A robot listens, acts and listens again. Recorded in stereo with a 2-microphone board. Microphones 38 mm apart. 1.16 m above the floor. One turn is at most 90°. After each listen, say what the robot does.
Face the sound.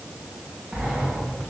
Turn 30° right.
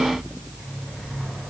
Facing the sliding door, over 4 m away.